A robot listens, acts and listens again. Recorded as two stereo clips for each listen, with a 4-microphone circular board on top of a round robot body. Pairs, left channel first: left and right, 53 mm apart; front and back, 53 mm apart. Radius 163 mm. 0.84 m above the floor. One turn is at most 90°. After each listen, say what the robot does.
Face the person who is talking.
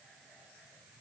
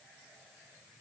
Keep listening.
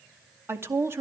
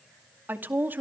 Turn 90° right.
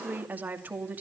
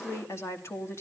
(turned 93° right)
Turn 35° right.
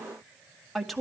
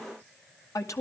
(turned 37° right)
Found it: a woman speaking, straight ahead, 2 to 4 m away.